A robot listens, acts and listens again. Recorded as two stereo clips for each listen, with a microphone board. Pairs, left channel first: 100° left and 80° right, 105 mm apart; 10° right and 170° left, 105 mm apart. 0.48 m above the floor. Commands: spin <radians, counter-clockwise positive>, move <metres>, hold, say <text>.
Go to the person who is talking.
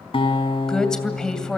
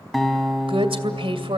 spin -3.05
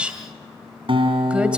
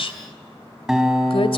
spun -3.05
move 1.0
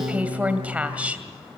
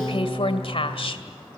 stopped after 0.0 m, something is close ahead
say Blocked. The woman speaking is further on, straight ahead.